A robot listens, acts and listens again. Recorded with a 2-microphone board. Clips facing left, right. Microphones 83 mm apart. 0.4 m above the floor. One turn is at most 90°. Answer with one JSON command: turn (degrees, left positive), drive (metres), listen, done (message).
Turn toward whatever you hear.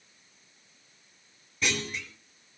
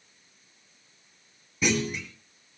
{"turn": -30}
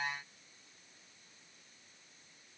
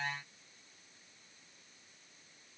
{"listen": true}
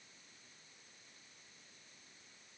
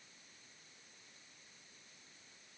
{"done": "I heard a clunk, but can't make it out now. It was about 20° left or 140° right."}